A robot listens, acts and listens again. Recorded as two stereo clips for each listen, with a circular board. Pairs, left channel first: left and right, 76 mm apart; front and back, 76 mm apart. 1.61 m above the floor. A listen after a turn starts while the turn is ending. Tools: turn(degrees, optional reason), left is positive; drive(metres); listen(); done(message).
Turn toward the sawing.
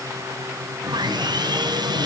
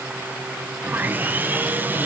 turn(degrees=-115, reason="The sawing: 115° right.")
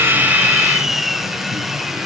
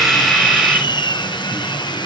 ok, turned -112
done("Facing the sawing.")